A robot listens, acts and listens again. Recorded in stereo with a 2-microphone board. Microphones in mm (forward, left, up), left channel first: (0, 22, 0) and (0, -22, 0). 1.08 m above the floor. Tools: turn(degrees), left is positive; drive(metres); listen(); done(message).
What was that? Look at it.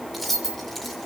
turn(degrees=30)
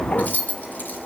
turn(degrees=130)
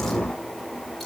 listen()
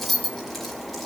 done("Facing the keys jangling.")